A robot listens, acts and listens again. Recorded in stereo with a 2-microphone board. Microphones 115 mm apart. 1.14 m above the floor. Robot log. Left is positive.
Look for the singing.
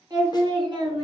note: The singing: about 50° right or 130° right.
cmd yaw -50
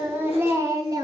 note: So it is at 35° right.
cmd yaw -35
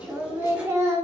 note: The singing is now 30° right.
cmd yaw -30
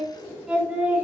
note: The singing is now 15° right.
cmd yaw -15
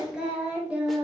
note: The singing is now 10° right.
cmd yaw -10
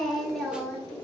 end: Found it: singing, straight ahead, 2 to 4 m away.